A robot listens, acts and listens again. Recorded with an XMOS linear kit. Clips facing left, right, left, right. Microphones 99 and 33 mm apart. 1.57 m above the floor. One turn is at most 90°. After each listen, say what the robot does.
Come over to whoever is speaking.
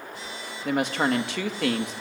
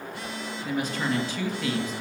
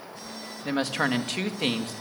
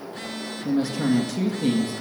Turn 90° left.
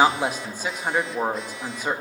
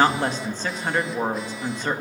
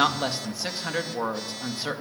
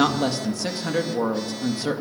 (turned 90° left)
Turn 10° left.
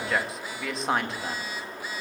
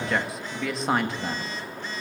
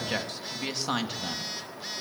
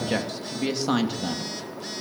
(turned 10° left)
Drive 1.0 m forward.
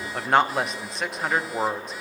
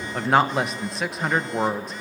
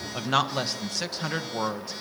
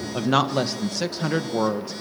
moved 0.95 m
Drive 1.0 m forward.
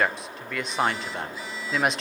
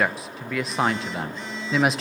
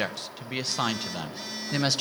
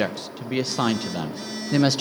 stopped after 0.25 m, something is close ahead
I am next to the woman speaking.